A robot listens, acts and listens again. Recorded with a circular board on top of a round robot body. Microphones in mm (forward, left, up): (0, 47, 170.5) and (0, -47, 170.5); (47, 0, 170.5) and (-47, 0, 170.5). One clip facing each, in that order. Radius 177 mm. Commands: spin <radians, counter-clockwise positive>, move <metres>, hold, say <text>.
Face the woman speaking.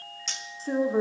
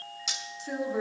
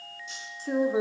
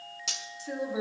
spin 0.70
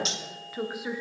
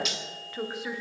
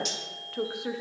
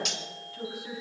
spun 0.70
say Facing the woman speaking.